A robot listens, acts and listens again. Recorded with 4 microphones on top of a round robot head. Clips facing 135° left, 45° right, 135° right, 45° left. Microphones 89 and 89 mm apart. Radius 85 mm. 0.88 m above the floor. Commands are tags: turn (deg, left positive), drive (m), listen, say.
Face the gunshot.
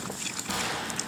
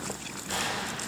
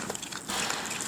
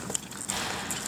<turn deg="155"/>
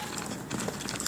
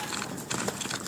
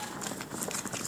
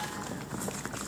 <say>Facing where the gunshot came from. I can't hear it now.</say>